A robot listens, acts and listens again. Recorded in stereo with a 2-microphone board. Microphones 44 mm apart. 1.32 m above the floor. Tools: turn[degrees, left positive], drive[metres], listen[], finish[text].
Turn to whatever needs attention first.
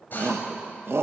Thought: The shout: about 70° right or 110° right.
Action: turn[-70]
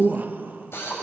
Thought: So it is at 45° right.
Action: turn[-45]
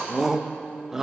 Thought: The shout is now 10° right.
Action: turn[-10]
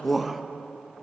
Action: finish[Found it: a shout, straight ahead, 1 to 2 m away.]